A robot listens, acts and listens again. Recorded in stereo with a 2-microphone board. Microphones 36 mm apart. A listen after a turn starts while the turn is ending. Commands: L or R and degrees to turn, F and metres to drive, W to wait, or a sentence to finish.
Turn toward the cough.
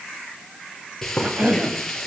R45
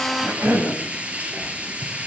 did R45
R85
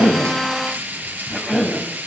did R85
Facing the cough.